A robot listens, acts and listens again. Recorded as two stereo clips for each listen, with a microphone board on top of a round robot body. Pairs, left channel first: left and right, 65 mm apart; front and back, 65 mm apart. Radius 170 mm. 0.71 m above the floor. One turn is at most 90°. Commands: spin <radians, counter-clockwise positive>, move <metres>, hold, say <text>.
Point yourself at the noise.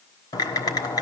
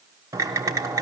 spin 1.57
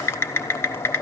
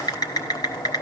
spin 0.61
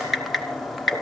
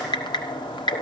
say Found it: typing on a keyboard, straight ahead.